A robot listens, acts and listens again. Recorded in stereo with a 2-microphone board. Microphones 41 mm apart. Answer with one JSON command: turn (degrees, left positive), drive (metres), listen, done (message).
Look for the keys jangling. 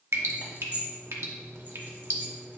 {"turn": -35}
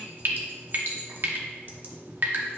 {"listen": true}
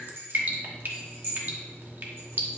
{"turn": -100}
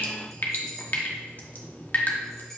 {"listen": true}
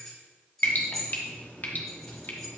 {"done": "Facing the keys jangling, 2 to 4 m away."}